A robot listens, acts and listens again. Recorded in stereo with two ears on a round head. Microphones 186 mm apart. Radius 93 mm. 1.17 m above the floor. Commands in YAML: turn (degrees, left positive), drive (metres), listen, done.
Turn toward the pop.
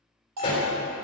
turn: 25
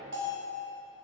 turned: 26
listen: true
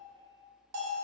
done: "I heard a pop, but can't make it out now. It was about straight ahead or 130° left."